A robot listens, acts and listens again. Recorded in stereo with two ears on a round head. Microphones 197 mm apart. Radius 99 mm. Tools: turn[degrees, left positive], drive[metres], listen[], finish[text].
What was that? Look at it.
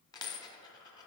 Thought: The dropped coin: about 20° left or 160° left.
Action: turn[20]
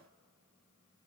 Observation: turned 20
Action: listen[]
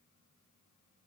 Action: finish[I heard a dropped coin, but can't make it out now. It was about straight ahead or 140° left.]